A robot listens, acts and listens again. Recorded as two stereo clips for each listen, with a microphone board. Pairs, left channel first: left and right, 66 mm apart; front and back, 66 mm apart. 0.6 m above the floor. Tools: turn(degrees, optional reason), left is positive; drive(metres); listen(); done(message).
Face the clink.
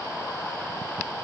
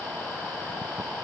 listen()
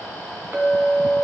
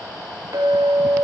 turn(degrees=-145, reason="The clink: 145° right.")
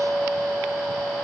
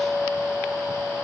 turn(degrees=-50, reason="The clink is now 50° right.")
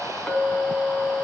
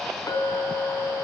turn(degrees=10, reason="The clink is now 10° left.")
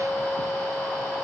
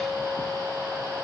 done("Found it: a clink, straight ahead.")